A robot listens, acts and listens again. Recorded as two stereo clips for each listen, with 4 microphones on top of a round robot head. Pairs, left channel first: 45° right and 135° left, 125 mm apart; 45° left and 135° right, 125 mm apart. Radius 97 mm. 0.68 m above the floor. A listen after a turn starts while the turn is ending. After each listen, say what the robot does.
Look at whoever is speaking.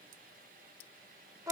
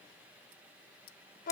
Keep listening.
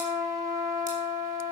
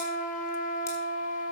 Keep listening.
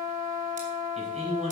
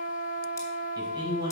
Turn 170° left.
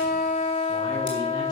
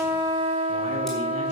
Keep listening.
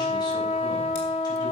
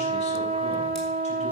Keep listening.
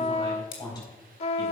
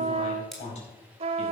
Turn 10° left.
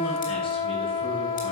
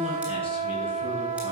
Keep listening.
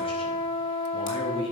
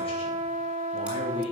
Found it: a man speaking, straight ahead, over 4 m away.